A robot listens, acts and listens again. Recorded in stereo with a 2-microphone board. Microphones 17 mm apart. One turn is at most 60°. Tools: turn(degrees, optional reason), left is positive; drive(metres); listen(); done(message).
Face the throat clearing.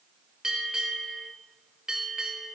listen()
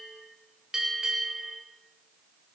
listen()
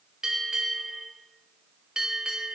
done("I can't make out throat clearing, only a bell.")